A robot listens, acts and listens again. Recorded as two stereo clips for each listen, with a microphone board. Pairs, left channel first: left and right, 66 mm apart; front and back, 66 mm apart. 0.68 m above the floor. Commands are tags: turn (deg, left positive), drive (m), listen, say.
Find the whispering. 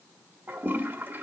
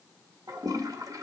<listen/>
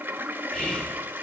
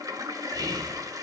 <turn deg="170"/>
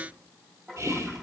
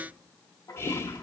<turn deg="-45"/>
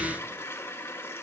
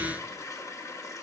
<listen/>
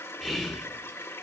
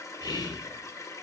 <say>Facing the whispering, 1 to 2 m away.</say>